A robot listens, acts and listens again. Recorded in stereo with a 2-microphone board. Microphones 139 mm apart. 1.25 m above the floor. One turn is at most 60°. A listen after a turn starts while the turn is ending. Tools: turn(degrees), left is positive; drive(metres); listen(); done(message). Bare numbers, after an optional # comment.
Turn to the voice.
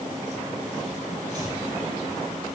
listen()
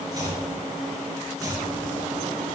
listen()
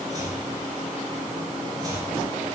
done("I can't make out anyone speaking, only chopping.")